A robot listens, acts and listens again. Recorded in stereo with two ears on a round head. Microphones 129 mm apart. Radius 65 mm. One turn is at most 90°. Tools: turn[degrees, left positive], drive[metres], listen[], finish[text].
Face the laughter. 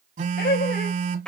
Thought: The laughter: about 65° left or 115° left.
Action: turn[65]
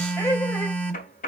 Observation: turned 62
Thought: So it is at 25° left.
Action: turn[25]
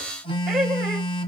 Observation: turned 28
Action: finish[Facing the laughter, 2 to 4 m away.]